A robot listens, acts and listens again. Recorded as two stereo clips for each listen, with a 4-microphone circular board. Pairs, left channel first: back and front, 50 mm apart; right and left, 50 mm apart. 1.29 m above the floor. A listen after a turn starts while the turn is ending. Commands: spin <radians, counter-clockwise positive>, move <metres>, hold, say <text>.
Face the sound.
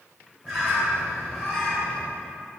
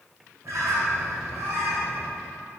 spin 1.40
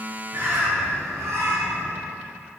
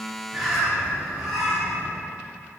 say Found it: a bird, straight ahead, 2 to 4 m away.